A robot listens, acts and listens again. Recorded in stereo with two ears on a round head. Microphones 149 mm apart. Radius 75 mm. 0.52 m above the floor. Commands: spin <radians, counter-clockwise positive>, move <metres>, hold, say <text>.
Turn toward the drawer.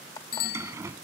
spin -0.26
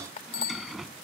say Facing the drawer.